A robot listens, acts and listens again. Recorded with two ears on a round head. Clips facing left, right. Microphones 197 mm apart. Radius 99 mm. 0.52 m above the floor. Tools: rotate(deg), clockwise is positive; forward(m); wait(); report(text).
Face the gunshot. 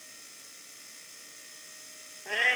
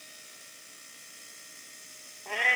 wait()
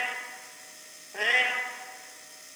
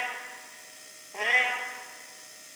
wait()
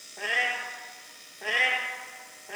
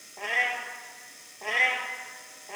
report("I can't make out a gunshot to turn to.")